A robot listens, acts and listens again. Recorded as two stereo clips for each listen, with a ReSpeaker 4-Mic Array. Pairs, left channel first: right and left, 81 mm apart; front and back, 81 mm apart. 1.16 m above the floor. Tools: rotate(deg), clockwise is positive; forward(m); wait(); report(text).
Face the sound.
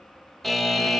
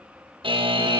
rotate(-180)
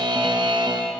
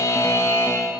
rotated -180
rotate(-55)
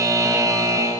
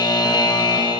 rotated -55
rotate(-40)
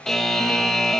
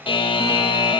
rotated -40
report("Found it: a buzzer, straight ahead.")